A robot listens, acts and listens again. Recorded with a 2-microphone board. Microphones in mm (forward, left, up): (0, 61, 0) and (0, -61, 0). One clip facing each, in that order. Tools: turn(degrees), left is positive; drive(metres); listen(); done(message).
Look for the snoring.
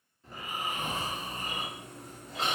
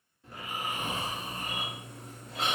turn(degrees=30)
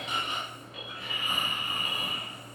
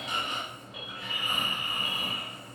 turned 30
turn(degrees=150)
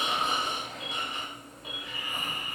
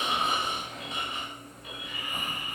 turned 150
turn(degrees=-25)
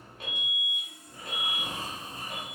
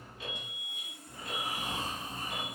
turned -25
turn(degrees=15)
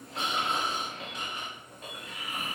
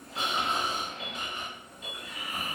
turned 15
done("Found it: snoring, straight ahead.")